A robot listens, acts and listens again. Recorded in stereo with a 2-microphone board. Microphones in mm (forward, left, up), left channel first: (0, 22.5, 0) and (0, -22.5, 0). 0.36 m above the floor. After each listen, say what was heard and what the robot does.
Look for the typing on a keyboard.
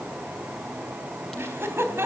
Keep listening.
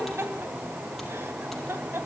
Keep listening.
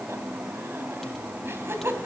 I can't make out typing on a keyboard to turn to.